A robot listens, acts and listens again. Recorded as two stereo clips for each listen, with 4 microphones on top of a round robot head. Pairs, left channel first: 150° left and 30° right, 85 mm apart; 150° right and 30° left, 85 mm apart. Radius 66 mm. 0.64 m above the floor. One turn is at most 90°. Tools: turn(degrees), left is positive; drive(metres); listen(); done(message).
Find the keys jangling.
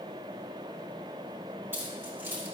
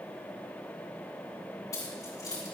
turn(degrees=-90)
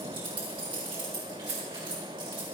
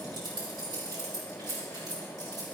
turn(degrees=-10)
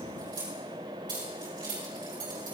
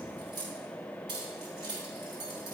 done("Facing the keys jangling, over 4 m away.")